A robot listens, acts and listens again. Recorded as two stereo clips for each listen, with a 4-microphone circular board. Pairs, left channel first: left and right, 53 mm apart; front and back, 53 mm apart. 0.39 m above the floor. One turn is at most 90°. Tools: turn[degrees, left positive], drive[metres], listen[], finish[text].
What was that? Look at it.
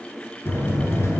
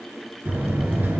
Thought: The buzzer: 130° left.
Action: turn[90]
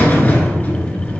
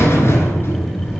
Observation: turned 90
Thought: The buzzer is now 35° left.
Action: turn[35]
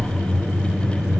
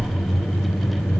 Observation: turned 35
Thought: The buzzer is now 10° right.
Action: turn[-10]
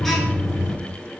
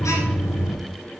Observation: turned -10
Action: finish[Found it: a buzzer, straight ahead, 1 to 2 m away.]